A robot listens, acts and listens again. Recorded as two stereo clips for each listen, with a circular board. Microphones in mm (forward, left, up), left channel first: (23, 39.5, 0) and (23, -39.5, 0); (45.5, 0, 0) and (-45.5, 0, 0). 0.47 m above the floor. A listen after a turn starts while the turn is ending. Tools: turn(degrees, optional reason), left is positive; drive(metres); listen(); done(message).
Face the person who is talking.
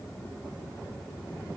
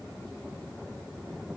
listen()
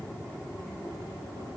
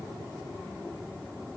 listen()
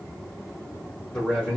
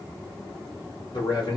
turn(degrees=15, reason="The man speaking: 15° left.")
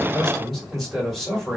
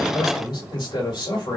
done("Found it: a man speaking, straight ahead.")